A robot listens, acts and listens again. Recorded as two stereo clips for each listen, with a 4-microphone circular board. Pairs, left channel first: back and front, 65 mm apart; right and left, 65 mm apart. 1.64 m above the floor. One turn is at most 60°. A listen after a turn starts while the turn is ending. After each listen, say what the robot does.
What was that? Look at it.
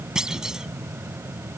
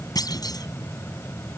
Turn 60° right.
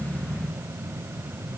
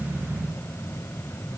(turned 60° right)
Turn 20° right.
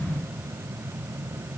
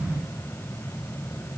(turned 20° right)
Facing where the clunk came from. I can't hear it now.